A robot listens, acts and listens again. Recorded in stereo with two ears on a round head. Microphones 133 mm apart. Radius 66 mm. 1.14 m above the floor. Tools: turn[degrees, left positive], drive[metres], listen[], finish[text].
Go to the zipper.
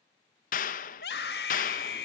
Action: listen[]
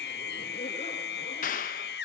Action: listen[]
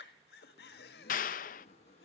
Thought: The zipper: about 45° left or 135° left.
Action: turn[45]
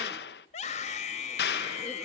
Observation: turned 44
Action: listen[]
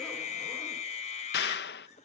Action: listen[]
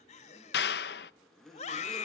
Action: drive[1.0]
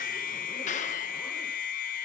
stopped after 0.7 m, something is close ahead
Action: listen[]
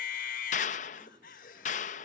Action: listen[]
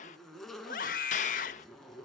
Action: finish[Something is in my way. I am facing the zipper but have not reached it.]